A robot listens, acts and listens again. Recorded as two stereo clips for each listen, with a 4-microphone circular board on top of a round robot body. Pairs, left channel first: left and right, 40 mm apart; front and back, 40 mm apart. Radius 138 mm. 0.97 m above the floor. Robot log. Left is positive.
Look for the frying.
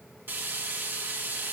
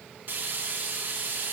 note: The frying: 130° right.
cmd yaw -130
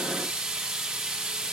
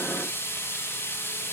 note: The frying is now 10° right.
cmd yaw -10
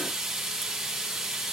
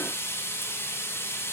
end: Found it: frying, straight ahead, over 4 m away.